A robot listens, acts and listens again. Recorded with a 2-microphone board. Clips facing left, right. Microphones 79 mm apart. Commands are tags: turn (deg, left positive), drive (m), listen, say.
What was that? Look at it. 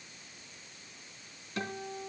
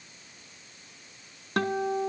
<turn deg="-70"/>
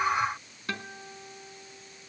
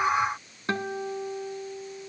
<turn deg="-35"/>
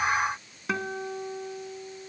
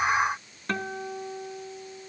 <say>Found it: a guitar, straight ahead.</say>